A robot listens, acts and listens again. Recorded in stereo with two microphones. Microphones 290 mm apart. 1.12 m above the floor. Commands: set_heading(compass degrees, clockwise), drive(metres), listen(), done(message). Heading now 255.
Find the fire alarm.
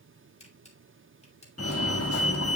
set_heading(200)
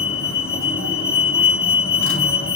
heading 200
set_heading(145)
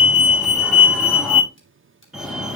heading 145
done("Found it: a fire alarm, straight ahead.")